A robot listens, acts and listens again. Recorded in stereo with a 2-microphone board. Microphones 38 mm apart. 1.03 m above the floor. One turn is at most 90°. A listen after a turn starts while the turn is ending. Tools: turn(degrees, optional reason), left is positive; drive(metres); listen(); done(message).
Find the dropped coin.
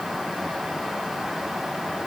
listen()
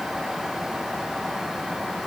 listen()
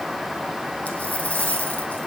turn(degrees=40, reason="The dropped coin: about 40° left or 140° left.")
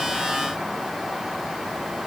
listen()
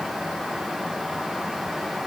done("I heard a dropped coin, but can't make it out now. It was about straight ahead or 100° left.")